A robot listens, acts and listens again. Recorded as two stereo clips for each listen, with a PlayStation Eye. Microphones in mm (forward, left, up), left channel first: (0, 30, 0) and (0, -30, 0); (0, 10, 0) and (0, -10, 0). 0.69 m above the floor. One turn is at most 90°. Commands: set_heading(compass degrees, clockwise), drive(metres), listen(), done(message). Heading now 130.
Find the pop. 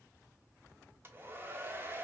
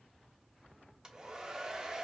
listen()
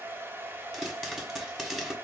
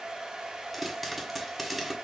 set_heading(160)
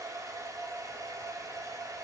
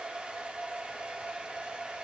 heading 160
listen()
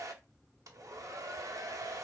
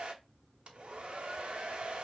done("I heard a pop, but can't make it out now. It was about 25° left or 145° right.")